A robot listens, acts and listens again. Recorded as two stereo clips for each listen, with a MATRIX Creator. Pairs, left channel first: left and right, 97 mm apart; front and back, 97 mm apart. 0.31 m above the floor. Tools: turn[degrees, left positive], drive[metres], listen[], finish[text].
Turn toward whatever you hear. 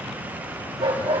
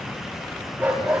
Thought: The dog barking: 105° right.
Action: turn[-105]
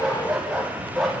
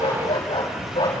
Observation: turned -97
Action: finish[Found it: a dog barking, straight ahead, over 4 m away.]